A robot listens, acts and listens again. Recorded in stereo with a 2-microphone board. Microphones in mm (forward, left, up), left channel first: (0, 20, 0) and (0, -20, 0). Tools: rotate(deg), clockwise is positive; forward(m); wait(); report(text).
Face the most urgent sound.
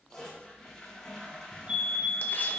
rotate(30)
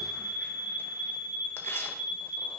rotate(110)
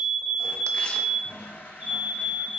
rotate(40)
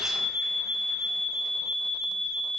report("Found it: a fire alarm, straight ahead, 2 to 4 m away.")